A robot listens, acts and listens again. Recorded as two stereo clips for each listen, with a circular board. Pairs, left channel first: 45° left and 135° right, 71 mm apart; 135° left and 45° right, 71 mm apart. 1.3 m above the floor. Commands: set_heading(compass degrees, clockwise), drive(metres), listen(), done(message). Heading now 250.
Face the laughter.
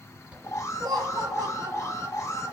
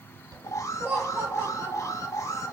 set_heading(355)
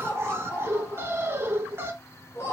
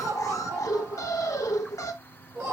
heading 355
set_heading(5)
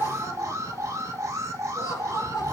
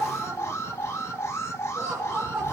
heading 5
set_heading(350)
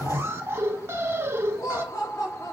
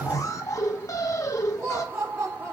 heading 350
done("Found it: laughter, straight ahead, 2 to 4 m away.")